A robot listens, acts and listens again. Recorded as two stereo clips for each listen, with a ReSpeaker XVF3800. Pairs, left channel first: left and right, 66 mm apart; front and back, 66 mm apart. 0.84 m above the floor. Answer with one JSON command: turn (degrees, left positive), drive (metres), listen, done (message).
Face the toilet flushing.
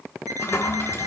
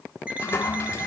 {"turn": 45}
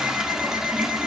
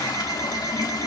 {"turn": -10}
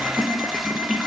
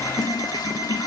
{"done": "Found it: a toilet flushing, straight ahead."}